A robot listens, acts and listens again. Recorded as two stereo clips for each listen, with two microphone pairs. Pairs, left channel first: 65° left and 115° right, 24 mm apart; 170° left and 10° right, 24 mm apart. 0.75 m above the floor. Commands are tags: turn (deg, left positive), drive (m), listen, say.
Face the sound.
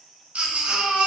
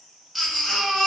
<turn deg="-100"/>
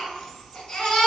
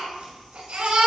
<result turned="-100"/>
<say>Found it: a baby crying, straight ahead, 1 to 2 m away.</say>